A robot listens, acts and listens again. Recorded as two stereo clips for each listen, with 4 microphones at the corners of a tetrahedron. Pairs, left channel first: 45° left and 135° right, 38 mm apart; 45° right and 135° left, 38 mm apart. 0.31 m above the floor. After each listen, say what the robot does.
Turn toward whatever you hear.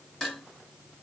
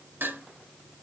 Turn 130° left.
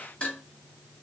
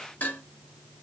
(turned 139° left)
Turn 10° right.
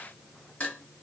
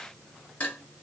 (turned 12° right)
Facing the dishes clattering, 2 to 4 m away.